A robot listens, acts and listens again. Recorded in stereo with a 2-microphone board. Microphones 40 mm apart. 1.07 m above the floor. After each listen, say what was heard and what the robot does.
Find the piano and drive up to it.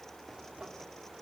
Keep listening.
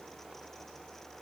Keep listening.
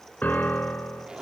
The piano: about 45° left or 135° left. Turn 45° left.
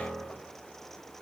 Drive 1.0 m forward.
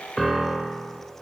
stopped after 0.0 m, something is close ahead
Blocked. The piano is further on, straight ahead.